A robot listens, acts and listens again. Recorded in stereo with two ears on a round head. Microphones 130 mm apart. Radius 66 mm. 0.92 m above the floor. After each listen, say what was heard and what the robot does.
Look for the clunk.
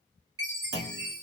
Turn 90° right.
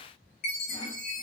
I heard a clunk from this way, but can't make it out now.